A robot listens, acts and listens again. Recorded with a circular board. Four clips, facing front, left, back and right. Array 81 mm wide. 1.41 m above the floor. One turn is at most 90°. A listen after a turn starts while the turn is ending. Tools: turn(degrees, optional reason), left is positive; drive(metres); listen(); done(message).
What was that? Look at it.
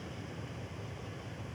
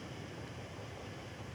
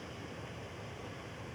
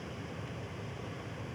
listen()
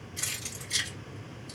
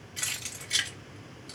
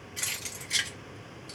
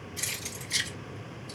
turn(degrees=90, reason="The keys jangling: 120° left.")
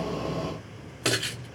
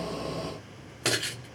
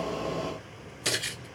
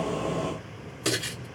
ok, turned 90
turn(degrees=40, reason="The keys jangling is now 40° left.")
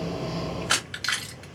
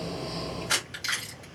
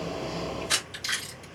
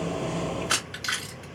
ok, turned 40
turn(degrees=-15, reason="The keys jangling is now 15° right.")
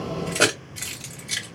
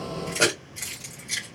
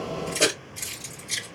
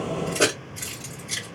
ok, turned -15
done("Facing the keys jangling.")